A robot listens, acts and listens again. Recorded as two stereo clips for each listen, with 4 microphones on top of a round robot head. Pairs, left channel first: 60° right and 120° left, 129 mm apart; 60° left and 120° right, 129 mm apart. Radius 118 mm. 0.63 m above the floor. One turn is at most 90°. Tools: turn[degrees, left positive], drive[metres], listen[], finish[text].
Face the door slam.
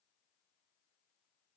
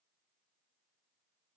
Action: listen[]
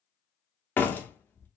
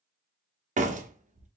Thought: The door slam: 135° right.
Action: turn[-90]
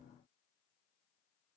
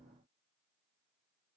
Thought: Nothing new. It was at 45° right.
Action: turn[-45]
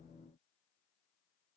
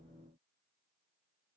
Action: finish[I heard a door slam from this way, but can't make it out now.]